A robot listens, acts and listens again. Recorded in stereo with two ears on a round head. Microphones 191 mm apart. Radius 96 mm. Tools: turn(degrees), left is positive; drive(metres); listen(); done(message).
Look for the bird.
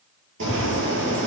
turn(degrees=-60)
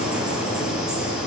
done("Found it: a bird, straight ahead, over 4 m away.")